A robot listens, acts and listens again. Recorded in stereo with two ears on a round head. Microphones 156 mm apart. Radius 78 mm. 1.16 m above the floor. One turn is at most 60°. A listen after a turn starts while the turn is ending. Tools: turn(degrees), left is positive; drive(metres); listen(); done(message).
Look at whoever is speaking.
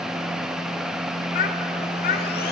turn(degrees=55)
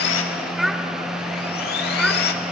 done("Found it: a child speaking, straight ahead.")